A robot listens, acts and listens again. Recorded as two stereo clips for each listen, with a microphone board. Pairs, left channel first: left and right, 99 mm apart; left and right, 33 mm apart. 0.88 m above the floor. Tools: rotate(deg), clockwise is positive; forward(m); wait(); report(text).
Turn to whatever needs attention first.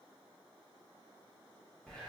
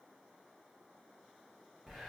wait()
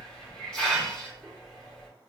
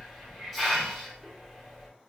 wait()
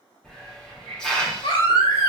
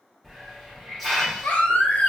rotate(-60)
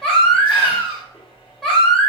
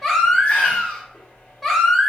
rotate(-10)
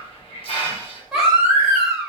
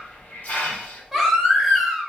report("Facing the baby crying.")